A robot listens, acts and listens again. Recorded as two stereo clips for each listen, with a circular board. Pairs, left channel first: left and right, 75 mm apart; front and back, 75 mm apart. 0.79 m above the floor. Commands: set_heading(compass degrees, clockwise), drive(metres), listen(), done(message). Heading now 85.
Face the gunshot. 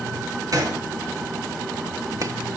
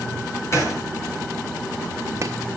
set_heading(135)
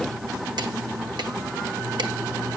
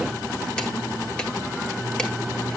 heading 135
done("I heard a gunshot from this way, but can't make it out now.")